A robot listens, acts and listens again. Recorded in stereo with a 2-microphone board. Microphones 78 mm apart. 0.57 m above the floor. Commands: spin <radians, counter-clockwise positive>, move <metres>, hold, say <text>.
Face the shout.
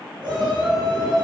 spin -1.57
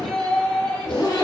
spin 0.26
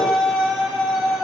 say Found it: a shout, straight ahead.